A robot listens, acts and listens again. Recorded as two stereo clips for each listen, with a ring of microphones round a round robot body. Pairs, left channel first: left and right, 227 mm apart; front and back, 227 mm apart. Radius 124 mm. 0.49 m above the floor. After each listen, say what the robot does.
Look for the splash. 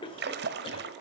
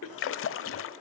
Turn 35° right.
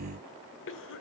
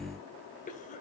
Facing where the splash came from. I can't hear it now.